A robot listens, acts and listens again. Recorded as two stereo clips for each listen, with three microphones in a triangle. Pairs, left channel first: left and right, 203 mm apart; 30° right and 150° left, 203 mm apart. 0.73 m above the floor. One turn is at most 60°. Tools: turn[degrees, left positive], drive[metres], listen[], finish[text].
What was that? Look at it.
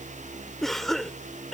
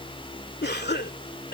Action: finish[Found it: a cough, straight ahead.]